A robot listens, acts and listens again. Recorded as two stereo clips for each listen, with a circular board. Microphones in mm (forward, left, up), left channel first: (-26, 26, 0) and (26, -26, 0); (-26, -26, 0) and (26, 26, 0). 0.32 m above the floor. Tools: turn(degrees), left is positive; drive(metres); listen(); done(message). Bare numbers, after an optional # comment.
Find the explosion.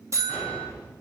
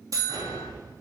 # The explosion: 65° left.
turn(65)
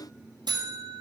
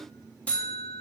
done("Facing where the explosion came from. I can't hear it now.")